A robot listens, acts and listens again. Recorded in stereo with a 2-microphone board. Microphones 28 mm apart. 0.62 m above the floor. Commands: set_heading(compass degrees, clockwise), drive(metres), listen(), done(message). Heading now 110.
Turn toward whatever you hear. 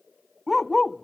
set_heading(80)
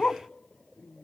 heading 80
set_heading(295)
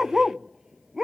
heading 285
set_heading(305)
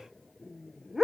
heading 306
set_heading(316)
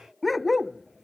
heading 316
done("Found it: a dog barking, straight ahead.")